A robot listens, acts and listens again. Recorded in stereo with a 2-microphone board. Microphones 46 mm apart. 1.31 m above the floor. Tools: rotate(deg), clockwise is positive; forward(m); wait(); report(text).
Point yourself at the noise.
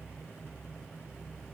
wait()
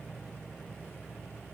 wait()
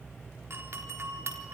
rotate(60)
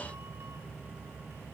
wait()
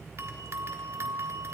rotate(60)
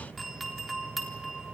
report("Found it: a doorbell, straight ahead.")